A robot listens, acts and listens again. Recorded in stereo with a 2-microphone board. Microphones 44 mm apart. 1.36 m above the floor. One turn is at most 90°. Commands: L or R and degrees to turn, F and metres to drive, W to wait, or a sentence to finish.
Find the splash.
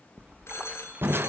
R25
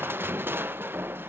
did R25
W
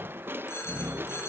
I heard a splash, but can't make it out now. It was about straight ahead or 130° right.